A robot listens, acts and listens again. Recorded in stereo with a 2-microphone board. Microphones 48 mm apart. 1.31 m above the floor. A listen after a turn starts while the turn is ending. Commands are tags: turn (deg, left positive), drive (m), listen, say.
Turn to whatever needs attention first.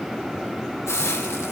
<listen/>
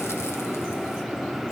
<listen/>
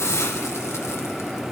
<say>I can't make out anything urgent, only a hiss.</say>